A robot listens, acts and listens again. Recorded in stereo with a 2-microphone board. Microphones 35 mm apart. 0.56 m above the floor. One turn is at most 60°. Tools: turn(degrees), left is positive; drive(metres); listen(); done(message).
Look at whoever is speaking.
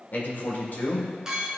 turn(degrees=55)
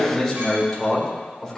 turn(degrees=10)
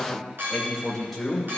done("Found it: a man speaking, straight ahead.")